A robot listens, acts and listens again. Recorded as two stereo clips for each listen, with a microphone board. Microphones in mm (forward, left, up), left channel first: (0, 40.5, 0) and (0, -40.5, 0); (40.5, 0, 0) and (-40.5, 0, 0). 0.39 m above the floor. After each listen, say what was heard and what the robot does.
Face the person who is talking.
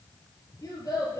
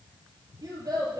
The child speaking: 140° left. Turn 140° left.
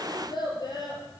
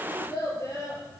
The child speaking is now 55° left. Turn 55° left.
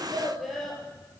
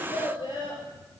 Facing the child speaking, over 4 m away.